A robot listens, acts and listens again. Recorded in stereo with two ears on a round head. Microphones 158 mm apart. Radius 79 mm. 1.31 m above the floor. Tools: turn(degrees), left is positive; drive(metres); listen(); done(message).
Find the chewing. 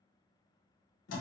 listen()
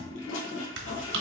turn(degrees=-70)
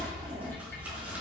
listen()
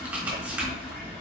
turn(degrees=-10)
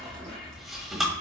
done("Found it: chewing, straight ahead, 1 to 2 m away.")